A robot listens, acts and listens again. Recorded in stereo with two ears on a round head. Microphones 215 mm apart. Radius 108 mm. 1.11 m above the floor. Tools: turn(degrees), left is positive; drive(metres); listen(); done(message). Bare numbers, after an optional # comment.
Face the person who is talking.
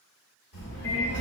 # The child speaking: about 55° left or 125° left.
turn(55)
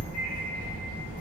# So it is at 10° left.
turn(10)
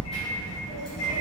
done("Facing the child speaking, 1 to 2 m away.")